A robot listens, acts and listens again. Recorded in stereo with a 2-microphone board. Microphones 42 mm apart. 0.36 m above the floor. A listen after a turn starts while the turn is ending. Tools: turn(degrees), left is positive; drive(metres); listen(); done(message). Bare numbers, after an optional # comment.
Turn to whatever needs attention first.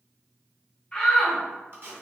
# The shout: about 20° left or 160° left.
turn(20)
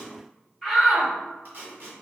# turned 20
done("Facing the shout.")